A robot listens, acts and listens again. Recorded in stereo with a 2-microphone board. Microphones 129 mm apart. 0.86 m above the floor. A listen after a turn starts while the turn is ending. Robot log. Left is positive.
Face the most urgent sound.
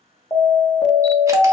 note: The alarm: about 35° left or 145° left.
cmd yaw +35
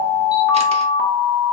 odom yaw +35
end: Facing the alarm, 1 to 2 m away.